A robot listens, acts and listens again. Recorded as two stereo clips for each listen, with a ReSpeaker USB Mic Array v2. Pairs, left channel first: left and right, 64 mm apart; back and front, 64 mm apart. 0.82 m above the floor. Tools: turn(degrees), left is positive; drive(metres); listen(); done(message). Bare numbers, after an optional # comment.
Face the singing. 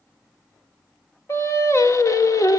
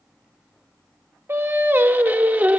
# The singing: 65° left.
turn(65)
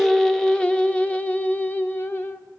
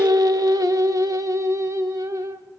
# The singing is now 35° left.
turn(35)
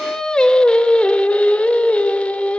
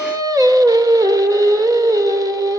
# The singing is now 20° left.
turn(20)
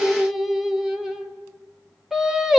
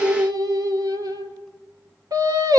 done("Facing the singing.")